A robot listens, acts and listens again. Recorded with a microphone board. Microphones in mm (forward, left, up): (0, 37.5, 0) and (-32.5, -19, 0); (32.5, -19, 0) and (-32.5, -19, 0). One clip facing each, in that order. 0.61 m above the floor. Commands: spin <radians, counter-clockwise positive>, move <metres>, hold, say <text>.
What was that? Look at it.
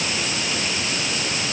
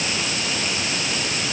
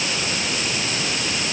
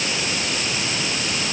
hold
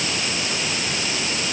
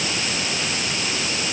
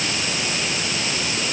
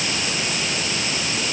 hold
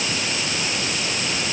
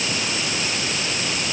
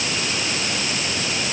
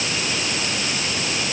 say I can't make out anything.